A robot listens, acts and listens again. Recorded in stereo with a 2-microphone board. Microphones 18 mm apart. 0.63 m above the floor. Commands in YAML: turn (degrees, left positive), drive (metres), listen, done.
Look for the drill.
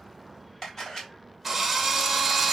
turn: -30
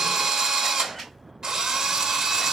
turn: -140
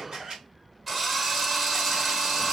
turn: -10
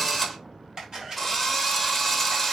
done: "Facing the drill."